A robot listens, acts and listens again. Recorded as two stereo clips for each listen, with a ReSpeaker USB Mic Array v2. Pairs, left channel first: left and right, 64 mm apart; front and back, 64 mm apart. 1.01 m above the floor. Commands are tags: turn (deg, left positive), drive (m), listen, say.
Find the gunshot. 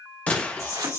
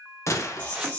<turn deg="25"/>
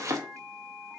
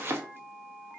<say>Facing where the gunshot came from. I can't hear it now.</say>